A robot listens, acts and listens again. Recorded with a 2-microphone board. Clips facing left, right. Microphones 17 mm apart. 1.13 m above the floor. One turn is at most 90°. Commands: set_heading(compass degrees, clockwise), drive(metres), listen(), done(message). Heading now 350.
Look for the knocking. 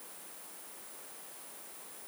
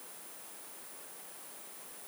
listen()
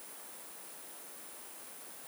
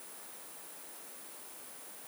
listen()
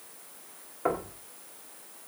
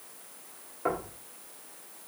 set_heading(320)
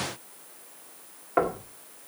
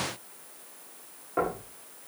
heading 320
set_heading(230)
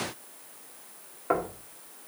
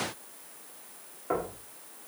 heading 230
set_heading(200)
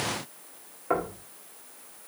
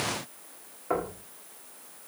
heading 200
set_heading(185)
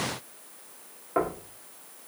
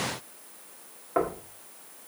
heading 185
done("Facing the knocking, 1 to 2 m away.")